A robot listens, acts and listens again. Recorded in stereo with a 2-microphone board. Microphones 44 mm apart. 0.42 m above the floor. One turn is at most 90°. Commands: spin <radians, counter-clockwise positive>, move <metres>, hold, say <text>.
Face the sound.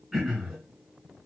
spin -0.52
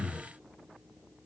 spin 0.35
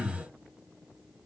say Found it: throat clearing, straight ahead, 2 to 4 m away.